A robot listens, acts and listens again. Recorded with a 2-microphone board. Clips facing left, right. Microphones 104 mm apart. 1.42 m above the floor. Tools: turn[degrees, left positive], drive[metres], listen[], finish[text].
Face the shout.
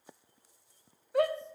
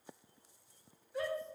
Thought: The shout: about 70° left or 110° left.
Action: turn[70]
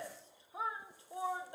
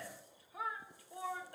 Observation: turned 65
Thought: So it is at 25° left.
Action: turn[25]
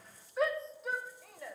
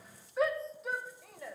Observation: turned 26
Action: finish[Found it: a shout, straight ahead, under 1 m away.]